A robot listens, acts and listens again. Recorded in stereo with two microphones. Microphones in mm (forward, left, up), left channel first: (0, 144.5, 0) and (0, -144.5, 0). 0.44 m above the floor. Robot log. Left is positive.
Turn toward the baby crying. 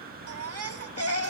note: The baby crying: about 55° right or 125° right.
cmd yaw -55
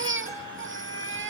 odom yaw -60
note: So it is at 50° right.
cmd yaw -50
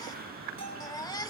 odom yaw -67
note: The baby crying is now 15° left.
cmd yaw +15
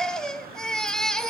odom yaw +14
end: Facing the baby crying.